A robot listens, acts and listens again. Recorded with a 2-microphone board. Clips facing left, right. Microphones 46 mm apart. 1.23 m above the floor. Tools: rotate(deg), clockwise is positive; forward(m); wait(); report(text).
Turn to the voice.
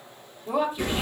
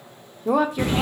rotate(90)
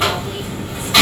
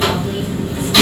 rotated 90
wait()
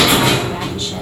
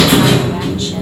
wait()
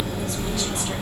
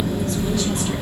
report("Facing where the woman speaking came from. I can't hear it now.")